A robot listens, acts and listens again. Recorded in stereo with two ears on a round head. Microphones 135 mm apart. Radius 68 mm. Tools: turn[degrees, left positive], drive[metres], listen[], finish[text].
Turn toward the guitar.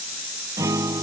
Thought: The guitar: about 20° right or 160° right.
Action: turn[-20]
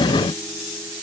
Action: listen[]
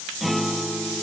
Action: finish[Found it: a guitar, straight ahead.]